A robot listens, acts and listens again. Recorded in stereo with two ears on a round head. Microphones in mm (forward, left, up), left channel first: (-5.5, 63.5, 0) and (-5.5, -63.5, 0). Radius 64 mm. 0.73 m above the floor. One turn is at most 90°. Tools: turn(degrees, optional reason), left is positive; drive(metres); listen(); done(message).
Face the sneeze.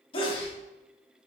turn(degrees=35, reason="The sneeze: about 35° left or 145° left.")
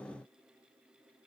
listen()
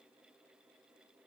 done("I heard a sneeze, but can't make it out now. It was about straight ahead or 110° left.")